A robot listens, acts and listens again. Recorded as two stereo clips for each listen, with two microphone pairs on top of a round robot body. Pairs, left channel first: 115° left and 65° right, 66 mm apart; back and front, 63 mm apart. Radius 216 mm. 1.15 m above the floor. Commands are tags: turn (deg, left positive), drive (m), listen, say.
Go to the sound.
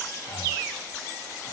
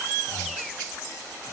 <turn deg="130"/>
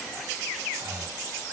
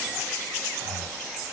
<turn deg="-20"/>
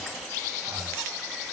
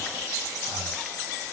<drive m="1.0"/>
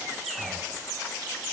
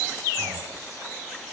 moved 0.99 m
<listen/>
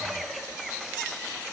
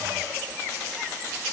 <listen/>
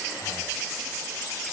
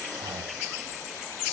<say>I heard breathing from this way, but can't make it out now. I did not reach it.</say>